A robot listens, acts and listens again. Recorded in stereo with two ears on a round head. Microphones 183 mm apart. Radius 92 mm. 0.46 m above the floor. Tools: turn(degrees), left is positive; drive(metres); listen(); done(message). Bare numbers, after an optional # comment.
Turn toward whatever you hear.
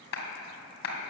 # The clap: about 55° left or 125° left.
turn(55)
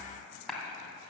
done("Facing the clap, 2 to 4 m away.")